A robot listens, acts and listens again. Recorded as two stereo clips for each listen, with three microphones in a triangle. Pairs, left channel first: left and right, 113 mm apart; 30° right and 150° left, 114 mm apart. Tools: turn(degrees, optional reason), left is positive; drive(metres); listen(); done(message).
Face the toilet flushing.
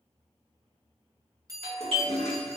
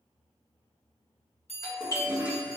turn(degrees=70, reason="The toilet flushing: 70° left.")
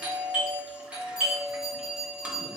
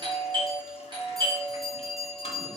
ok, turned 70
listen()
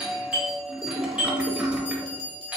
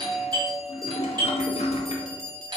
turn(degrees=-10, reason="The toilet flushing is now 10° right.")
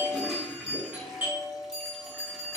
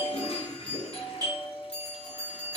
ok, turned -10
done("Found it: a toilet flushing, straight ahead, under 1 m away.")